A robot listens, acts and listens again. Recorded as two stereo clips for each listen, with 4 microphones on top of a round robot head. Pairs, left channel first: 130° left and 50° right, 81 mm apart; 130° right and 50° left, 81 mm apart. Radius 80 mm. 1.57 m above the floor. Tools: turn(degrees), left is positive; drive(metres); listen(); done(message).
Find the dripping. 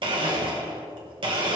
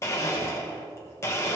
listen()
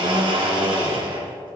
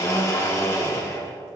listen()
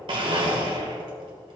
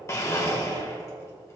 done("I can't make out dripping, only a blender.")